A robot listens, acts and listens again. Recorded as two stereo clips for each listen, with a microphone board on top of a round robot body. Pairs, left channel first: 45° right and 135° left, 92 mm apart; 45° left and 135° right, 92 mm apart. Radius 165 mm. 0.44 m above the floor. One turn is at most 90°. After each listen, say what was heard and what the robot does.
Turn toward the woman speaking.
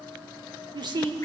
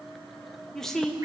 The woman speaking: 125° left. Turn 90° left.
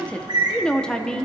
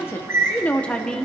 The woman speaking is now 10° right. Turn 10° right.
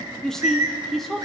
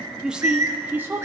The woman speaking is now 125° right. Turn 90° right.
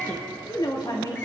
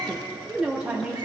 The woman speaking is now 60° right. Turn 60° right.
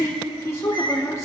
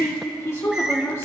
Facing the woman speaking.